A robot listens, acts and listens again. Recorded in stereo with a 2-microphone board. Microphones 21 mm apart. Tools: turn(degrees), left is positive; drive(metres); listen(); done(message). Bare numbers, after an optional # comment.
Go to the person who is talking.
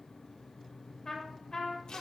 listen()
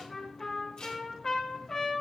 listen()
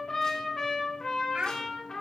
turn(-90)
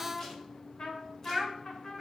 drive(1.0)
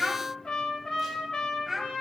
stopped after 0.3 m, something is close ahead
# The child speaking is now 10° right.
turn(-10)
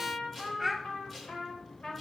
done("Something is in my way. I am facing the child speaking but have not reached it.")